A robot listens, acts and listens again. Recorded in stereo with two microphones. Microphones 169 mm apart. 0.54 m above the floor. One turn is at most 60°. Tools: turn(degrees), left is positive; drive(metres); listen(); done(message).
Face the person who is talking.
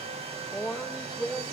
turn(degrees=30)
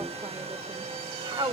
turn(degrees=-30)
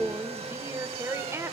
turn(degrees=-15)
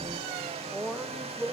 done("Found it: a woman speaking, straight ahead.")